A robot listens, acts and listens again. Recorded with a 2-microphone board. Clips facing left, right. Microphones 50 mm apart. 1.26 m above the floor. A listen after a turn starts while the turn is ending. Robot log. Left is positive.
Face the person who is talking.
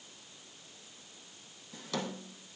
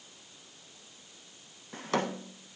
cmd idle
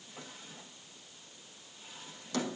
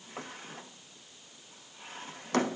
cmd idle
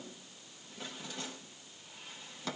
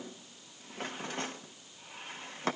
end: I can't make out anyone speaking to turn to.